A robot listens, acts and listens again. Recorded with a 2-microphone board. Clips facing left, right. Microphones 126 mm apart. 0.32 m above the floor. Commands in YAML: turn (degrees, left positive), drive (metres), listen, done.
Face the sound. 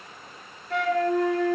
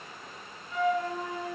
turn: 75
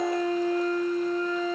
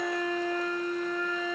turn: 35
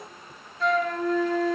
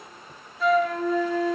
done: "Found it: a flute, straight ahead."